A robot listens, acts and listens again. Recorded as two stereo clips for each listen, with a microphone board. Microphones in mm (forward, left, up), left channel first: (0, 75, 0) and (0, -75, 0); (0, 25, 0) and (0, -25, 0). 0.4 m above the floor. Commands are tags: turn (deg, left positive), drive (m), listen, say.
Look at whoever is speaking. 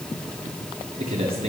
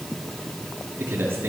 <turn deg="-45"/>
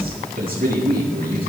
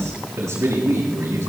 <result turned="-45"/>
<turn deg="-95"/>
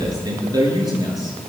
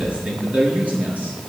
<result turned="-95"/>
<turn deg="-25"/>
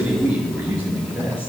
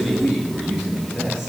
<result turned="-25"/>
<turn deg="-10"/>
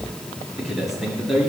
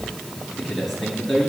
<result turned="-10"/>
<say>Facing the man speaking, over 4 m away.</say>